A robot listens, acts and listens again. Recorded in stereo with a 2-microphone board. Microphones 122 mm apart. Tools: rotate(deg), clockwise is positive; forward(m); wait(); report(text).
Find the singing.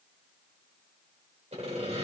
wait()
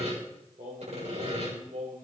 rotate(90)
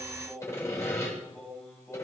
rotate(-15)
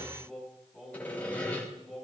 report("Facing the singing.")